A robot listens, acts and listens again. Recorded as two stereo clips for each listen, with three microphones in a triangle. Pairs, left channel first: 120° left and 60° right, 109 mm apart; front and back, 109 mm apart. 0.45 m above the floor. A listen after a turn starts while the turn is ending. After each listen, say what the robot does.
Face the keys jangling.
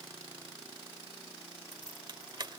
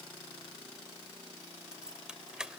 Turn 100° right.
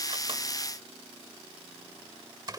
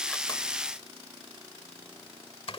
Turn 15° right.
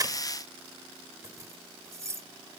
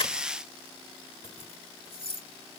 Found it: keys jangling, straight ahead.